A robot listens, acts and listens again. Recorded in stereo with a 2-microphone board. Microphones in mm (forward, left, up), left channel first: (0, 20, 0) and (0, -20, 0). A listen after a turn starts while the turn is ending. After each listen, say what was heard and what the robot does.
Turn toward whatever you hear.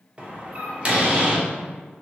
The door slam: about 35° right or 145° right. Turn 35° right.
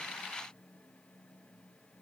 Keep listening.
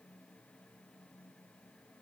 I heard a door slam, but can't make it out now. It was about straight ahead or 110° right.